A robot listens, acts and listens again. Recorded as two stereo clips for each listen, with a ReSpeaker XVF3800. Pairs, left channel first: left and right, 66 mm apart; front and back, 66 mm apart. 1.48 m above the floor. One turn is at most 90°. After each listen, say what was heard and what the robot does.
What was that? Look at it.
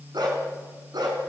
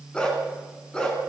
The dog barking: 80° right. Turn 80° right.
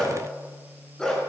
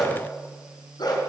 The dog barking is now 10° left. Turn 10° left.
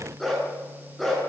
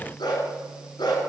Facing the dog barking, over 4 m away.